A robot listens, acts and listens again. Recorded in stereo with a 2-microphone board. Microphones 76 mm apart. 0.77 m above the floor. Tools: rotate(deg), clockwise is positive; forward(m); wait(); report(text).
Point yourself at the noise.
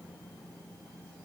wait()
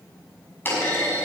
rotate(-25)
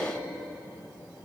wait()
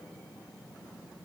report("I heard a clunk, but can't make it out now. It was about straight ahead or 130° left.")